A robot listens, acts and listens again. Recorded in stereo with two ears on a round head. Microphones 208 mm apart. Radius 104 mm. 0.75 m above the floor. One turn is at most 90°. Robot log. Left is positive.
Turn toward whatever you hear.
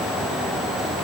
cmd idle
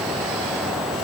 cmd idle
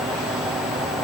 end: I can't make out anything to turn to.